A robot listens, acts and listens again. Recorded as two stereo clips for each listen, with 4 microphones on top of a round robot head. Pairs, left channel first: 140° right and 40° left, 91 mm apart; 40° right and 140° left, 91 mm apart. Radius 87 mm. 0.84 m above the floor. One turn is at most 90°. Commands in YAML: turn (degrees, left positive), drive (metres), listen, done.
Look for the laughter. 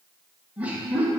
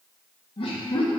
turn: -30
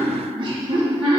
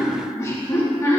turn: 20
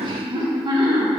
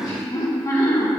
turn: 10
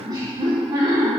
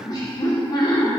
done: "Found it: laughter, straight ahead, 2 to 4 m away."